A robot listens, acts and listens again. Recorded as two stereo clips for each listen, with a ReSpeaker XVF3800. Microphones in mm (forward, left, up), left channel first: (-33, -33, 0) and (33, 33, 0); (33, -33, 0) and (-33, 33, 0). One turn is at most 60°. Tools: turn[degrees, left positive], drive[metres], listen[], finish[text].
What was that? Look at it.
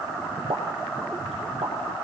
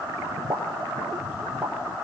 Thought: The pop: 65° left.
Action: turn[60]
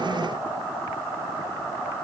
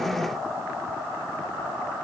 Action: finish[Facing where the pop came from. I can't hear it now.]